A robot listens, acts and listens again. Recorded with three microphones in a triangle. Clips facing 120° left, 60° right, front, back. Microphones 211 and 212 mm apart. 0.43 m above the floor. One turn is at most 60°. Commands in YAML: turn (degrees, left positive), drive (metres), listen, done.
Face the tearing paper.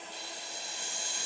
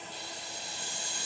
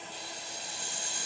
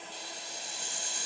listen: true
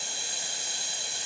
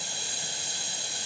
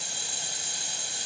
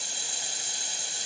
listen: true
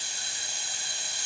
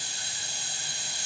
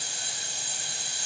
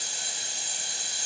done: "I can't make out tearing paper to turn to."